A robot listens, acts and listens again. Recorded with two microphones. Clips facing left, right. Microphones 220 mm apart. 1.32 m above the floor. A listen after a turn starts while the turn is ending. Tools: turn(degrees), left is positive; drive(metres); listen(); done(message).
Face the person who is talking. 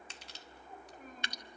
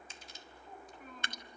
turn(degrees=40)
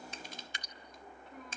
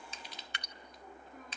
turn(degrees=100)
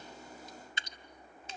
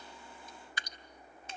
listen()
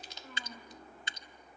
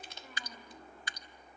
turn(degrees=-10)
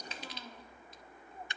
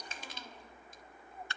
listen()
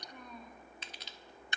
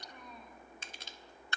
done("Found it: a child speaking, straight ahead.")